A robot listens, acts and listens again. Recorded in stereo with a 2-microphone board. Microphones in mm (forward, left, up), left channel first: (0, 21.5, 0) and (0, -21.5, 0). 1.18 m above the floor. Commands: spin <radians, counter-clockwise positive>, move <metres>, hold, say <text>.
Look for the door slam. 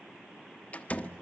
spin 0.61
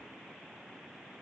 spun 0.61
hold
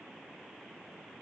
say I heard a door slam, but can't make it out now. It was about straight ahead or 110° left.